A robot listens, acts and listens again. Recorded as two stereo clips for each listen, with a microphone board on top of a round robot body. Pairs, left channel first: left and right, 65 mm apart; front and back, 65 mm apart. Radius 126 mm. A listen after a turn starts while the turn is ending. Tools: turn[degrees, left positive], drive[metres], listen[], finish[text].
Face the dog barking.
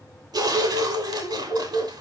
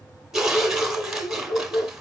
Thought: The dog barking: 60° right.
Action: turn[-60]
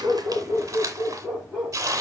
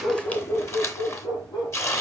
Action: finish[Found it: a dog barking, straight ahead.]